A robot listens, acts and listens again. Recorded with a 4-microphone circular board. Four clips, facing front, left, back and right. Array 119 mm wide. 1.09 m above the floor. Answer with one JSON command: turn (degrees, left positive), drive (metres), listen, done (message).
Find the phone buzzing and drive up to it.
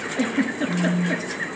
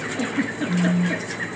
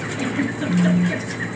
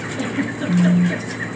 {"turn": -45}
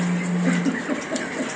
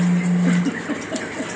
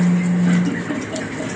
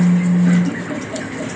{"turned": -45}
{"turn": -15}
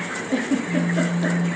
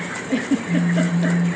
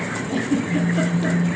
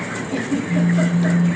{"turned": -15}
{"drive": 1.0}
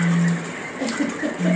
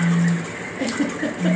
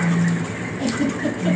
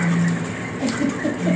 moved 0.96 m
{"drive": 1.0}
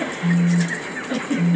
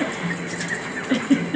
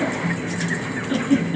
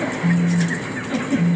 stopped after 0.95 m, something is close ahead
{"done": "I am next to the phone buzzing."}